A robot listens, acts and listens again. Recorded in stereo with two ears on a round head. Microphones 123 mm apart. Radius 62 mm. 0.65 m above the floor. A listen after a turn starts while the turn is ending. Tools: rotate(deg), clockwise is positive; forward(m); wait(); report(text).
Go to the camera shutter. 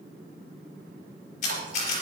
rotate(-55)
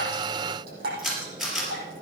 forward(1.0)
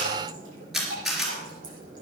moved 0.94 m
forward(1.0)
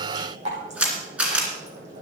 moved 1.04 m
forward(1.0)
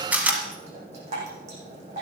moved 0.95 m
rotate(10)
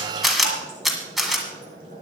forward(1.0)
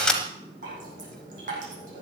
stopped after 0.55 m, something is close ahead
report("I am next to the camera shutter.")